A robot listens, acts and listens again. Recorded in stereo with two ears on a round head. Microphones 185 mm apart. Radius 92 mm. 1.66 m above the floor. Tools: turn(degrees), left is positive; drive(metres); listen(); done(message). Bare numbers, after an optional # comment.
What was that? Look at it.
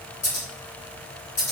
turn(30)
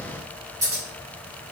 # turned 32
# So it is at 15° right.
turn(-15)
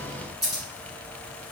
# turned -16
done("Facing the scissors.")